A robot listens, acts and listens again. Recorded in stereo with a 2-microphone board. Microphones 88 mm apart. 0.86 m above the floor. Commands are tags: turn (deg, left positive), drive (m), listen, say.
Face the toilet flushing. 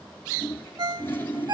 <turn deg="25"/>
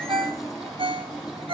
<say>Found it: a toilet flushing, straight ahead, over 4 m away.</say>